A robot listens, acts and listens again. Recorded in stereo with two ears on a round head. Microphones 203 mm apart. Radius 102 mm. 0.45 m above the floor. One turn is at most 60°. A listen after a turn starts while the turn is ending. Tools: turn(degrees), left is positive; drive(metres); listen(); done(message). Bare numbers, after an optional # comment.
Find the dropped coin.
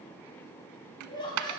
# The dropped coin: about 75° right or 105° right.
turn(-60)
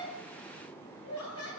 listen()
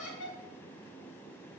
done("I heard a dropped coin, but can't make it out now. It was about 15° right or 45° right.")